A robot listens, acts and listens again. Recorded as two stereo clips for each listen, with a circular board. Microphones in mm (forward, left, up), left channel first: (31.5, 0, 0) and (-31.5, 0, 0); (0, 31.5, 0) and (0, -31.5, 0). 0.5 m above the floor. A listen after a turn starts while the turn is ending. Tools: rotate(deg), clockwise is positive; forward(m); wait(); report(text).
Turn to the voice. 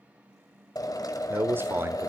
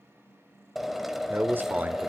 rotate(145)
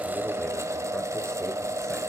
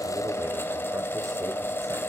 wait()
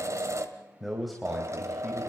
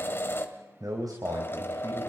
rotate(90)
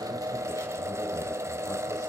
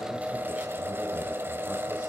wait()
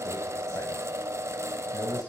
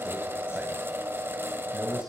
rotate(15)
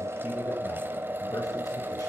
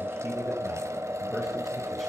wait()
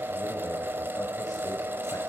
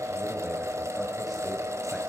wait()
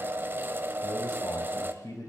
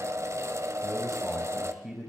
report("Found it: a man speaking, straight ahead, 2 to 4 m away.")